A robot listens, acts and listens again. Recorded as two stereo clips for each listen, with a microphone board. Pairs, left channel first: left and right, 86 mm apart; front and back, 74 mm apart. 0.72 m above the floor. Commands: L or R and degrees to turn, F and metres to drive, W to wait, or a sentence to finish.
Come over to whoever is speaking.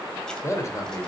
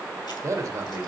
L140
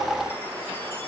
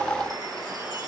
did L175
R35
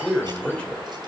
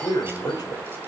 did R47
L10
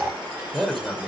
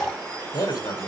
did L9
F1.0
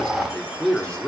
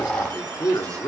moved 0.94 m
L10
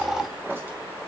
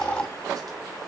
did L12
W
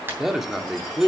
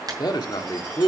F1.0
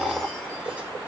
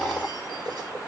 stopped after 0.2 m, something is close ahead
W
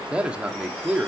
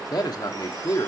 R15
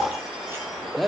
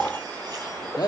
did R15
Arrived at the man speaking, straight ahead.